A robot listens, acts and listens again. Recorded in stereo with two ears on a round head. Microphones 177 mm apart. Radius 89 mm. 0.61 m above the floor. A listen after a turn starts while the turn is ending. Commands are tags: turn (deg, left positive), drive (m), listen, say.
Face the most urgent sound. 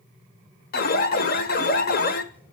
<turn deg="50"/>
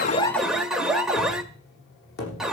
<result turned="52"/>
<say>Facing the alarm.</say>